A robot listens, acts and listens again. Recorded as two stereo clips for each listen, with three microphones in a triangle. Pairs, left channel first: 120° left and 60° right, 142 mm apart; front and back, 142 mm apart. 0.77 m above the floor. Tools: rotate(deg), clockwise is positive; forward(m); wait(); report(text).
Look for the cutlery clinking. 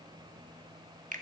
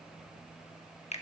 wait()
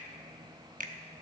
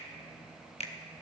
wait()
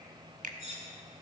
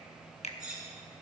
rotate(95)
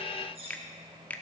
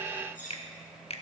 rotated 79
rotate(15)
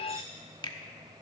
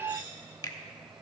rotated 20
wait()
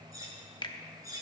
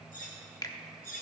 report("Facing the cutlery clinking, 2 to 4 m away.")